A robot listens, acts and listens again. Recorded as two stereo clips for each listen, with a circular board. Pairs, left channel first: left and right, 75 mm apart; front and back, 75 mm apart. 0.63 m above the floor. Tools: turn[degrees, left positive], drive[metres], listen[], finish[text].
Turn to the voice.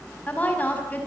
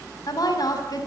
Thought: The woman speaking: 25° left.
Action: turn[25]
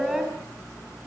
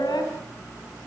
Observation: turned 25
Action: listen[]
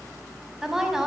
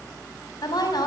Action: finish[Found it: a woman speaking, straight ahead, over 4 m away.]